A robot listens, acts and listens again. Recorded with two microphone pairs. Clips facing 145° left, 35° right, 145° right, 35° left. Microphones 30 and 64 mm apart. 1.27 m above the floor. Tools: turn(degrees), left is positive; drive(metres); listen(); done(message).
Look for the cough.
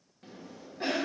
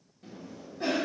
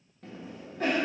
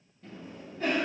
turn(degrees=-155)
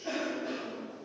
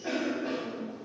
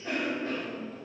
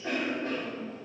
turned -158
done("Facing the cough.")